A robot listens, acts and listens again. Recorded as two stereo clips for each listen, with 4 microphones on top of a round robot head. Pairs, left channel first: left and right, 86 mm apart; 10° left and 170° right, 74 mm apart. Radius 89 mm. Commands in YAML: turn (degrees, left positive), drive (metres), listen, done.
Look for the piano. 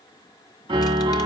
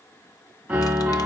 turn: -110
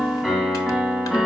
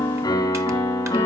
turn: -15
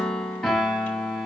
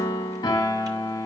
done: "Facing the piano."